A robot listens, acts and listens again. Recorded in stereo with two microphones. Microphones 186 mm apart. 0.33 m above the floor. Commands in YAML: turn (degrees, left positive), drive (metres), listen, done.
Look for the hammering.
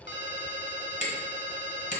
turn: 40
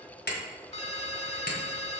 turn: 90
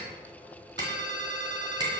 turn: -25
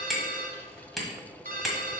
done: "Facing the hammering, 1 to 2 m away."